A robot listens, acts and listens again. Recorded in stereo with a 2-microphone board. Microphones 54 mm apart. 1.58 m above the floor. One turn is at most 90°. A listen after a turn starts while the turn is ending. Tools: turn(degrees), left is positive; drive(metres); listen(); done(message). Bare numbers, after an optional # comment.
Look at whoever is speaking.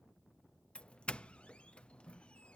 listen()
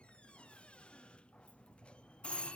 listen()
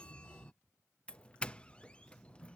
done("I can't make out anyone speaking to turn to.")